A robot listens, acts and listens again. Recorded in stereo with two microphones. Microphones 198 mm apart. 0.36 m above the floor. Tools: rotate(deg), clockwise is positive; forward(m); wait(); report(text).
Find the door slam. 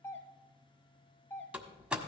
rotate(30)
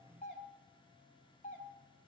wait()
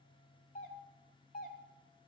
report("I heard a door slam, but can't make it out now. It was about 25° left or 145° right.")